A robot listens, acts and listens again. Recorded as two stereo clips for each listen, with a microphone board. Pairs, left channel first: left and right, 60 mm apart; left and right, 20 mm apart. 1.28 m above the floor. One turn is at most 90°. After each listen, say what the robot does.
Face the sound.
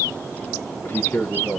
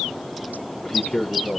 Turn 40° left.
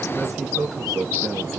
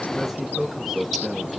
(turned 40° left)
Facing the man speaking.